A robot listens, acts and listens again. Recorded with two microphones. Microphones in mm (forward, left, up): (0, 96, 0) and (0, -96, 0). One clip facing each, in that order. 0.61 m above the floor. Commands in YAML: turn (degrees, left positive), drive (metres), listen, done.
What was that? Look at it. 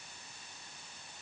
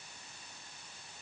listen: true
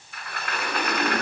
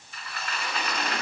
turn: 60
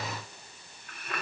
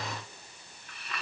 turn: 55
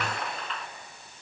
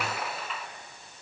done: "Found it: a sliding door, straight ahead, 1 to 2 m away."